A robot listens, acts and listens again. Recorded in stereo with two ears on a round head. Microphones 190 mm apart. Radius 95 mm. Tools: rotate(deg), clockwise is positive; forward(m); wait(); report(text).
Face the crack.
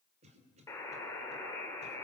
wait()
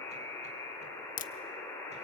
rotate(-40)
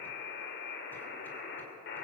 wait()
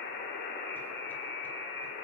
report("I heard a crack, but can't make it out now. It was about straight ahead or 100° left.")